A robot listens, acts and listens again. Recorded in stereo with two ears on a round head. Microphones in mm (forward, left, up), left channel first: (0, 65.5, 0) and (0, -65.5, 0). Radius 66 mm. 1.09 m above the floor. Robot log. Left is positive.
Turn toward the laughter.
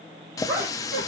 note: The laughter: about 15° right or 165° right.
cmd yaw -15
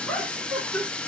cmd yaw +30
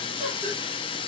cmd idle
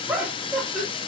end: Found it: laughter, straight ahead, 2 to 4 m away.